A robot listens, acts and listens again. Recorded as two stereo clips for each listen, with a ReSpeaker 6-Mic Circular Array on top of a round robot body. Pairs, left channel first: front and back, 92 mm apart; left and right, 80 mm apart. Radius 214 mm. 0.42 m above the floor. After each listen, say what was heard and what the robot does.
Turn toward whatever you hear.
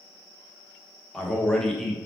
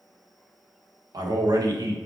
The man speaking: 85° right. Turn 85° right.
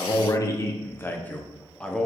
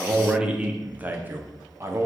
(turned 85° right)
The man speaking is now 80° right. Turn 80° right.
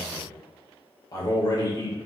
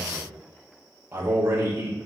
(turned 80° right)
The man speaking is now 40° right. Turn 40° right.
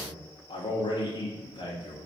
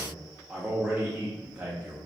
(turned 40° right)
The man speaking is now 15° right. Turn 15° right.
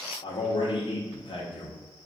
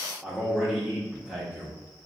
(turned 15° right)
Facing the man speaking, 1 to 2 m away.